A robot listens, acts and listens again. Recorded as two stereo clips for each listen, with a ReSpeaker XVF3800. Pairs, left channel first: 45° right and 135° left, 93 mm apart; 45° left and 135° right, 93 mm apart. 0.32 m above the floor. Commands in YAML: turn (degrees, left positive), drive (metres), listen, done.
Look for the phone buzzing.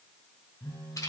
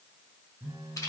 turn: -75
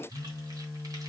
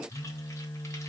turn: 25
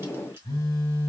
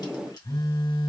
done: "Found it: a phone buzzing, straight ahead."